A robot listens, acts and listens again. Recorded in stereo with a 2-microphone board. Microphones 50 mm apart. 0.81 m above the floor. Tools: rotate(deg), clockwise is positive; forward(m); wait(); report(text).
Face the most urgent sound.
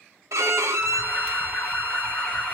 rotate(-30)
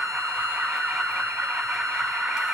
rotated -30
rotate(20)
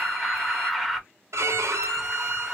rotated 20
report("Facing the alarm, under 1 m away.")